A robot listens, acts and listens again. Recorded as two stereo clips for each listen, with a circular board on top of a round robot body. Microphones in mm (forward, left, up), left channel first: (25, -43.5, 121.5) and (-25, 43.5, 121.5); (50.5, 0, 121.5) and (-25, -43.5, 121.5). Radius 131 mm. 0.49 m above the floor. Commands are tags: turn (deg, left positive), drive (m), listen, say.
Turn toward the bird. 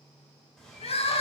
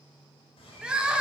<turn deg="25"/>
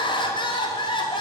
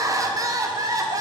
<listen/>
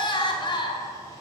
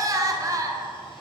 <listen/>
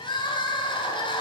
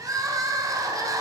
<say>I heard a bird from this way, but can't make it out now.</say>